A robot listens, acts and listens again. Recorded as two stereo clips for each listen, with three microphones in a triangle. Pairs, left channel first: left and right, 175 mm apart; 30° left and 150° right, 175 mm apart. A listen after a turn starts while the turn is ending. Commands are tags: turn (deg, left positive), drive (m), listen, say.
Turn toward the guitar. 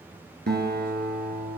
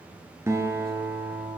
<turn deg="-75"/>
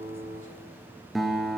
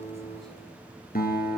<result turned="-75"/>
<say>Facing the guitar, 1 to 2 m away.</say>